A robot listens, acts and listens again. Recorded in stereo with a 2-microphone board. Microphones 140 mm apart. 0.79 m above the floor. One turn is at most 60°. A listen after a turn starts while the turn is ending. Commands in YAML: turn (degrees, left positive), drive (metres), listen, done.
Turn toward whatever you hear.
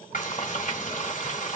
turn: 60
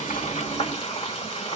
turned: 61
turn: 45
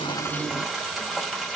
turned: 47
done: "Found it: frying, straight ahead."